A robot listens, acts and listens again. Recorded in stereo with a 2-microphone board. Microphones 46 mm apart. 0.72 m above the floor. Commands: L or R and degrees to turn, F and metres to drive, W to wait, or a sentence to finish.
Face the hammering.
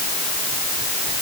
W
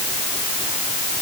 W
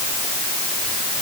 I can't make out hammering to turn to.